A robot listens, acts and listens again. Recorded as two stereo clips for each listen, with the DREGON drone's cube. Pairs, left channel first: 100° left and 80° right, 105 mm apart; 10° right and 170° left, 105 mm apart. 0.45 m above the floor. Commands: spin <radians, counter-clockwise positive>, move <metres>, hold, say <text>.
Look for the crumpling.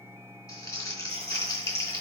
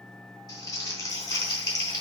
spin 0.70
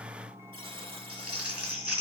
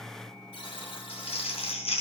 say Facing the crumpling, 2 to 4 m away.